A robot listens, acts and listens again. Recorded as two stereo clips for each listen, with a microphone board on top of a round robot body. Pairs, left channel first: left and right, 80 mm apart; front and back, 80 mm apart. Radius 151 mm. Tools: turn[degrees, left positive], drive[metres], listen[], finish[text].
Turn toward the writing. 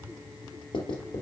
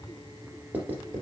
Thought: The writing: 110° left.
Action: turn[110]
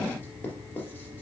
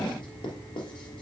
Thought: The writing is now 25° left.
Action: turn[25]
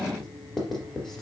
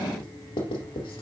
Action: finish[Found it: writing, straight ahead, 2 to 4 m away.]